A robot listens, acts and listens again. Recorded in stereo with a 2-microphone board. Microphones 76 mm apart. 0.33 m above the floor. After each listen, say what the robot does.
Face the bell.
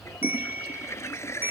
Turn 25° right.
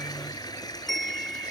Facing the bell.